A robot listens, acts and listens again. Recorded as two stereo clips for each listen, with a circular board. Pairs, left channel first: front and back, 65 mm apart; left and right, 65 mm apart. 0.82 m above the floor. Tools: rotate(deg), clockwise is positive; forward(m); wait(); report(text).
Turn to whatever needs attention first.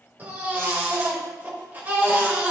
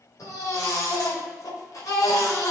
rotate(-120)
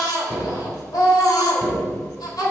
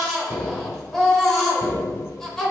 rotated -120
report("Found it: a baby crying, straight ahead, 1 to 2 m away.")